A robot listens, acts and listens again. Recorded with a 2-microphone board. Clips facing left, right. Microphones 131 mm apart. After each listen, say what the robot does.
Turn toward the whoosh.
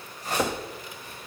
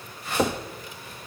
Turn 40° left.
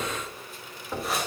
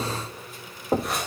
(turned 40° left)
Facing the whoosh, over 4 m away.